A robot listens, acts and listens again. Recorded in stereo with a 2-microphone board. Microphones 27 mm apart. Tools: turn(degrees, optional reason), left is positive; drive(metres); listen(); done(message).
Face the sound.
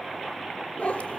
turn(degrees=60, reason="The cat meowing: about 60° left or 120° left.")
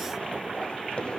turn(degrees=45, reason="So it is at 45° left.")
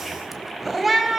turn(degrees=-10, reason="The cat meowing is now 10° right.")
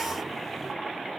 listen()
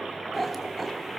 done("Found it: a cat meowing, straight ahead, 2 to 4 m away.")